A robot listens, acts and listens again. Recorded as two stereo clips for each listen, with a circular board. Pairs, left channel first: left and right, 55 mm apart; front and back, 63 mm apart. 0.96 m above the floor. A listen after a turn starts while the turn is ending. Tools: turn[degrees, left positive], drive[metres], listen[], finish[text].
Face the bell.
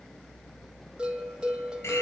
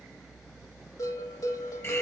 Thought: The bell: 20° right.
Action: turn[-20]
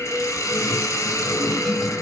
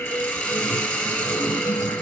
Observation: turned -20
Action: finish[Found it: a bell, straight ahead.]